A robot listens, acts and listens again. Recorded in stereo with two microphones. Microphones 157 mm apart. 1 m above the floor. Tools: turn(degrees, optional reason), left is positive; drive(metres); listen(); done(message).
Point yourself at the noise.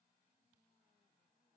listen()
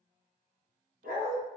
turn(degrees=-65, reason="The dog barking: about 65° right or 115° right.")
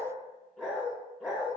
done("Facing the dog barking.")